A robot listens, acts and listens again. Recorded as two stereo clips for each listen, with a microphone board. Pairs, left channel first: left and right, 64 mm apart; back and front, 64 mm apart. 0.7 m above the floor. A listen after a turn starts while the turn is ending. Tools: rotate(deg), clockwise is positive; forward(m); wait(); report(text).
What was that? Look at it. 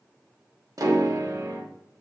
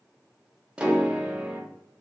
rotate(75)
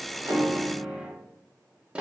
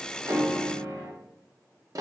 rotate(20)
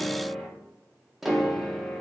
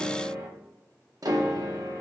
report("Facing the piano, under 1 m away.")